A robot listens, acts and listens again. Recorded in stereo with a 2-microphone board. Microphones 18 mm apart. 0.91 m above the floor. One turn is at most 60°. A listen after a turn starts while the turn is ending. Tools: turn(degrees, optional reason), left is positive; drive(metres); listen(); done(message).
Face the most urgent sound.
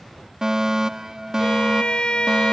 turn(degrees=-35, reason="The fire alarm: about 35° right or 145° right.")
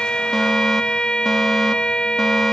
listen()
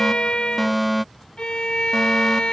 done("Found it: a fire alarm, straight ahead.")